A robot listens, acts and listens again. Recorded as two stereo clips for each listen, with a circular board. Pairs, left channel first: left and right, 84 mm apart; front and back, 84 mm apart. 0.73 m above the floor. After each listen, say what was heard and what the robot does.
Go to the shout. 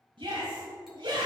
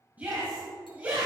The shout: 110° right. Turn 110° right.
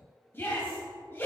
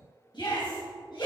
The shout is now 25° left. Turn 25° left.
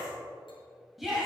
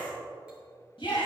Drive 1.0 m forward.
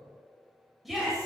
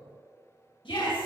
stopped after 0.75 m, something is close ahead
Blocked. The shout is further on, straight ahead.